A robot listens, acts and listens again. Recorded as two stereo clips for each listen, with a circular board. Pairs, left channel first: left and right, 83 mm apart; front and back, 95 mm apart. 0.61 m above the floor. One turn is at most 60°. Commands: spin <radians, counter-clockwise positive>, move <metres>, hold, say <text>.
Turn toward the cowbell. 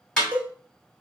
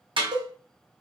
spin -1.05
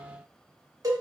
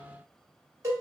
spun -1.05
spin -1.05
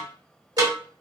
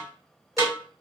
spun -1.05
spin -1.05
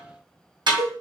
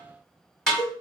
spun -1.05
spin -0.87
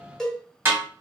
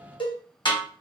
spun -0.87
spin 0.17
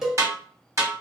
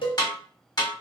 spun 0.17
say Found it: a cowbell, straight ahead, 1 to 2 m away.